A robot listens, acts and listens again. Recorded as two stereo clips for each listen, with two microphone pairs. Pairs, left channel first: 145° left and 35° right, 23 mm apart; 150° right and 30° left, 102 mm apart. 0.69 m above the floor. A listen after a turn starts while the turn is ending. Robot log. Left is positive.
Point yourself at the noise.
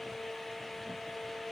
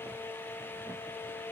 cmd idle
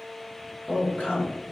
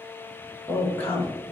note: The woman speaking: 140° left.
cmd yaw +140
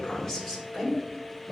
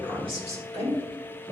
note: The woman speaking is now 30° left.
cmd yaw +30
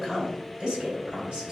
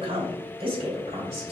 end: Facing the woman speaking, 2 to 4 m away.